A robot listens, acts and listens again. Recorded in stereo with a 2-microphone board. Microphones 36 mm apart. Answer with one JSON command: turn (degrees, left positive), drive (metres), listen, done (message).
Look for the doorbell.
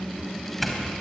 {"turn": 30}
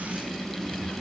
{"listen": true}
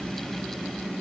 {"listen": true}
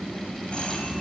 {"done": "I heard a doorbell, but can't make it out now. It was about 25° right or 145° left."}